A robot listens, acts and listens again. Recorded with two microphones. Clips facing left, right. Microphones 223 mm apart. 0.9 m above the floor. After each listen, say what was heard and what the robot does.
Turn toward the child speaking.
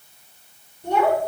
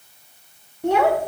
Turn 90° right.
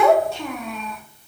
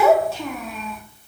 Facing the child speaking.